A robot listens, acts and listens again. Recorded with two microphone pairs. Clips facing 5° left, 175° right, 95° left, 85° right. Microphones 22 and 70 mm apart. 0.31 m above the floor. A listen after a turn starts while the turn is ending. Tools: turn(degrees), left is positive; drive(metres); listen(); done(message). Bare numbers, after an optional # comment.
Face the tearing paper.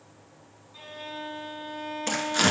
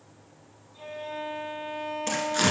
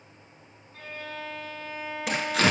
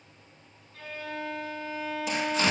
# The tearing paper: 80° left.
turn(80)
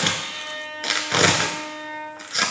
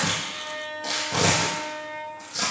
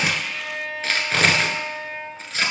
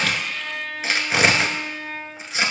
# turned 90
done("Facing the tearing paper.")